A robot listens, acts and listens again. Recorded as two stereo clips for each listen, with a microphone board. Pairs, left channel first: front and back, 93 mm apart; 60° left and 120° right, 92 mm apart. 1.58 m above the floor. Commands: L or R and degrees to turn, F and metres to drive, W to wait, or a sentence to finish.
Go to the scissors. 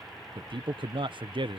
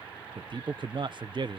W
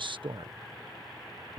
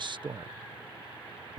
W
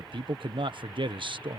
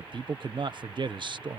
I can't make out scissors to turn to.